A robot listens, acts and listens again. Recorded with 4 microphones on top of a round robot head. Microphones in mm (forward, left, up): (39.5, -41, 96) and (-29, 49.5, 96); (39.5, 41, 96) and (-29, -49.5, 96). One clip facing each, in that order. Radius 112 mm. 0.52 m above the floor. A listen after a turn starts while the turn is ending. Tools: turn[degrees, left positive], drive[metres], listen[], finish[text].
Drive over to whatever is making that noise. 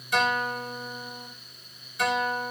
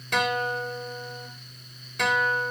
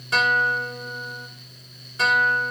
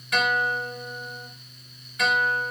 Thought: The guitar: 110° left.
Action: turn[110]
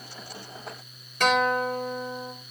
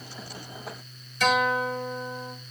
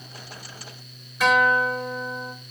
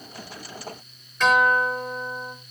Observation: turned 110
Thought: The guitar is now 30° right.
Action: turn[-30]
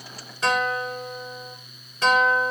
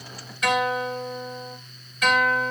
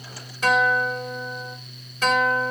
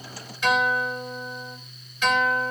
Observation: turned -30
Action: drive[1.0]
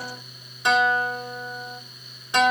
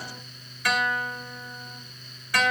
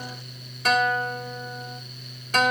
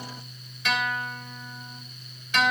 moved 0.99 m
Thought: The guitar is now 10° left.
Action: turn[10]
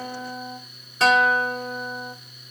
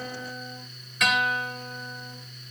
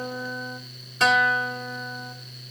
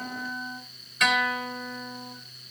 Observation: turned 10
Action: drive[1.0]
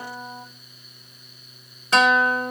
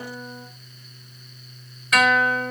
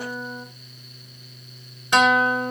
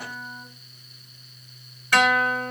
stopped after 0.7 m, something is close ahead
Action: finish[Arrived at the guitar, straight ahead.]